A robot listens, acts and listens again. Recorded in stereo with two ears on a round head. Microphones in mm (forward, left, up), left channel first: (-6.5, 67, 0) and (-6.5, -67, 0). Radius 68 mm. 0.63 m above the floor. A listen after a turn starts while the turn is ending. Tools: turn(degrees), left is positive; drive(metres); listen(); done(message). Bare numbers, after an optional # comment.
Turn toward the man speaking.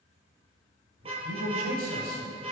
# The man speaking: about 65° right or 115° right.
turn(-65)
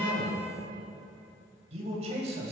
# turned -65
# So it is at 45° right.
turn(-45)
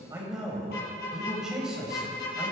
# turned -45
done("Facing the man speaking.")